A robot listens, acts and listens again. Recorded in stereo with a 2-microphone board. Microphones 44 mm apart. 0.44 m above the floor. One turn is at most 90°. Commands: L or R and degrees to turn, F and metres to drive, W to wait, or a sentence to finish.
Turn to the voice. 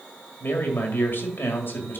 L60
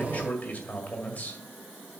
L45
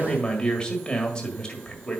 L25
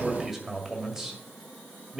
R10
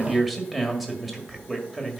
Found it: a man speaking, straight ahead, 1 to 2 m away.